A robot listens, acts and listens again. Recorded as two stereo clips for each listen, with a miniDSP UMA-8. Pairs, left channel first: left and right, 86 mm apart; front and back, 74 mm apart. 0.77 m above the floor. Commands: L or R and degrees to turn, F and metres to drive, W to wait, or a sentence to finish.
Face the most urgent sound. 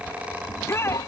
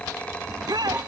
L150
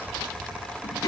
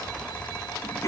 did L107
L40
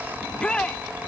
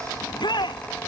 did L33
L10
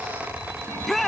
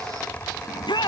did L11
Found it: a shout, straight ahead.